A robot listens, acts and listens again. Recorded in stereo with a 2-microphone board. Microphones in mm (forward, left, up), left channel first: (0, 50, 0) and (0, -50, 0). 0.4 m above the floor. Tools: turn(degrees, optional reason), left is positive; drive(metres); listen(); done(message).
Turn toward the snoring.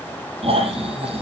turn(degrees=-70, reason="The snoring: about 70° right or 110° right.")
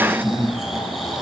done("Facing the snoring.")